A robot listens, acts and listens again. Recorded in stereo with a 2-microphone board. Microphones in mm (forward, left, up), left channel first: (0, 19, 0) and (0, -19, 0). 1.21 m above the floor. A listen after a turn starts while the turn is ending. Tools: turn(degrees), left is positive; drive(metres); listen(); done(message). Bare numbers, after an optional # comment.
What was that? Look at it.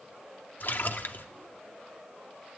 # The splash: about 60° left or 120° left.
turn(60)
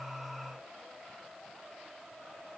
listen()
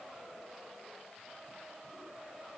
done("I heard a splash, but can't make it out now. It was about straight ahead or 60° left.")